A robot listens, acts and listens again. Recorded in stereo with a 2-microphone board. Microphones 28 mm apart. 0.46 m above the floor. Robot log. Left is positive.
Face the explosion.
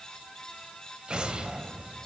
note: The explosion: about 40° right or 140° right.
cmd yaw -40
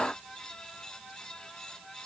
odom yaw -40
cmd idle
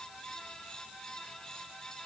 end: I heard an explosion, but can't make it out now. It was about straight ahead or 100° right.